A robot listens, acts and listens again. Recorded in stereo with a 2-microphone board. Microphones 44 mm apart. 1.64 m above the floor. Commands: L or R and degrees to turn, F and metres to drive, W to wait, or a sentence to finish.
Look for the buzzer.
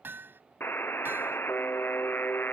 L60
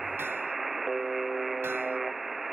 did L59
Found it: a buzzer, straight ahead.